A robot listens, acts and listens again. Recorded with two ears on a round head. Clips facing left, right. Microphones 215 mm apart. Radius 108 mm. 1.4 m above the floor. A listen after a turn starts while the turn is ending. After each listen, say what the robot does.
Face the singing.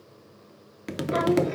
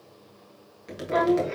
Turn 30° left.
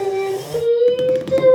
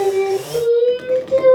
Turn 150° left.
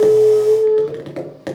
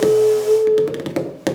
Turn 35° left.
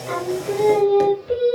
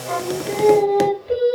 Turn 10° left.
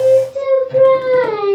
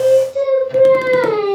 Found it: singing, straight ahead, 2 to 4 m away.